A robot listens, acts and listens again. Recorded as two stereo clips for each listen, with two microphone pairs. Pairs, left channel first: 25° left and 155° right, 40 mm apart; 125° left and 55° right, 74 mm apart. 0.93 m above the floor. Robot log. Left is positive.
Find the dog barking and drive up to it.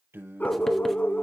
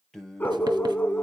note: The dog barking: 60° left.
cmd yaw +60
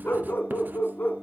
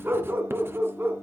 cmd fwd 1.0
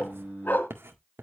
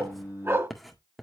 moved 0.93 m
cmd fwd 1.0
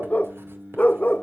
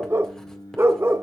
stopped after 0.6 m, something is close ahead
note: The dog barking is now 10° right.
cmd yaw -10
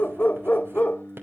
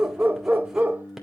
end: Arrived at the dog barking, straight ahead.